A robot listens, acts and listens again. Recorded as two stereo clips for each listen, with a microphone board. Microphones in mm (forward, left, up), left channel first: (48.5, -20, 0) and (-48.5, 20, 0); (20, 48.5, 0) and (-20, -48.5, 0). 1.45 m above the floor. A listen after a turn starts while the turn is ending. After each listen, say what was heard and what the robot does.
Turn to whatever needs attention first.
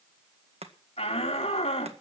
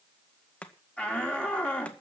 The shout: 15° right. Turn 15° right.
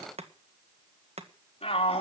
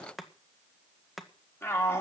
Found it: a shout, straight ahead, 2 to 4 m away.